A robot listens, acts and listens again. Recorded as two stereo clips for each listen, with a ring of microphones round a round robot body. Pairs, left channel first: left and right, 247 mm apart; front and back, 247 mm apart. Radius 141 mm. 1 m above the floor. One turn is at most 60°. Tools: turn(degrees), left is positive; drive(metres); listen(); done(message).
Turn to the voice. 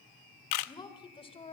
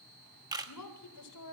turn(degrees=25)
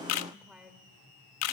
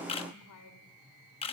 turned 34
done("Facing the woman speaking.")